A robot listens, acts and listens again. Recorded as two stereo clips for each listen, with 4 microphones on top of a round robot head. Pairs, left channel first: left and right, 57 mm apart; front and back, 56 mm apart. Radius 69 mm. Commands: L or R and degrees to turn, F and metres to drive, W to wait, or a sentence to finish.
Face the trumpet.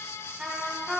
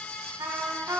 R170
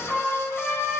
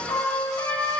L10
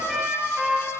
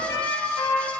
Facing the trumpet, 2 to 4 m away.